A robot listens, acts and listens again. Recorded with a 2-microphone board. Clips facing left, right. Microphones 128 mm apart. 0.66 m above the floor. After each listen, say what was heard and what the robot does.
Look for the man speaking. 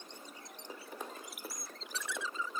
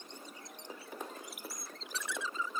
Keep listening.
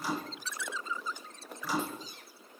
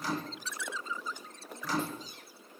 Keep listening.
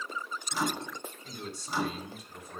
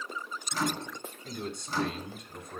The man speaking: about 65° right or 115° right. Turn 65° right.
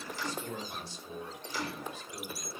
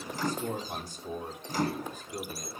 So it is at 45° right. Turn 45° right.
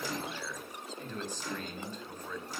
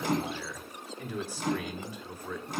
The man speaking is now 10° right. Turn 10° right.
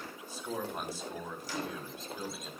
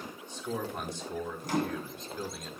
Facing the man speaking, 2 to 4 m away.